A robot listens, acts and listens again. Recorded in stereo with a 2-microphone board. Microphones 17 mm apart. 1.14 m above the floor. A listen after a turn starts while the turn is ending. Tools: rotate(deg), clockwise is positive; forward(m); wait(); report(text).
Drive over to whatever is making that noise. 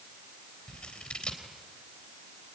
rotate(-65)
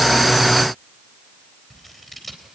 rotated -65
forward(1.0)
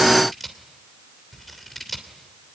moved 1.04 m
forward(1.0)
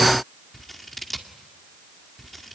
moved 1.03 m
forward(1.0)
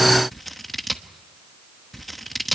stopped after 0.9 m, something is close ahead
report("I am next to the scissors.")